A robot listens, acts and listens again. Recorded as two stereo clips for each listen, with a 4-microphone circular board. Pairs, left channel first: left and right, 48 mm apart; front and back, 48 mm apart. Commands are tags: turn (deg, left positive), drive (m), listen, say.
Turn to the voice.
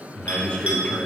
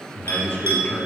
<turn deg="30"/>
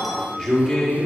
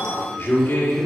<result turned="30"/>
<say>Facing the man speaking, 1 to 2 m away.</say>